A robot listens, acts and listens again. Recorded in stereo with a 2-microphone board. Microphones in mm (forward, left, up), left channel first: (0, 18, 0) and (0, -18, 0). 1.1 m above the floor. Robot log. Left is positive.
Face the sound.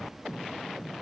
cmd idle
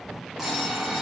cmd yaw -30
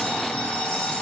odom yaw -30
note: So it is at 20° left.
cmd yaw +20
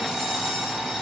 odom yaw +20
end: Found it: an alarm clock, straight ahead.